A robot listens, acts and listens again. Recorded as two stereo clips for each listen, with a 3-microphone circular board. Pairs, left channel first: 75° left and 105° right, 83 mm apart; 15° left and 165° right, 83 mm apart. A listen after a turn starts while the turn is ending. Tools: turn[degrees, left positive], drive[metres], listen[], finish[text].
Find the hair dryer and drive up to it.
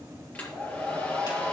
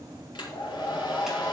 Action: drive[1.0]
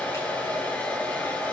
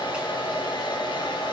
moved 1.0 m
Action: drive[1.0]
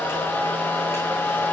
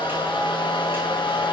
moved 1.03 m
Thought: The hair dryer is now 10° left.
Action: turn[10]
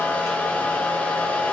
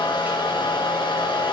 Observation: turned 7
Action: drive[1.0]
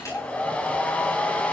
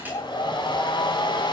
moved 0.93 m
Action: drive[1.0]
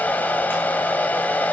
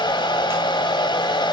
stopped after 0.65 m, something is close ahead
Action: finish[I am next to the hair dryer.]